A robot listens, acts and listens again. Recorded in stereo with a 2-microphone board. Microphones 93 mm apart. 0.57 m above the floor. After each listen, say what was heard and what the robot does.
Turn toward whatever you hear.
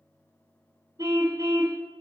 The car horn: about 40° right or 140° right. Turn 40° right.
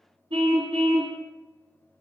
So it is at 100° right. Turn 100° right.
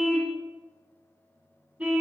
The car horn is now 10° right. Turn 10° right.
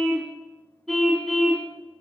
Facing the car horn.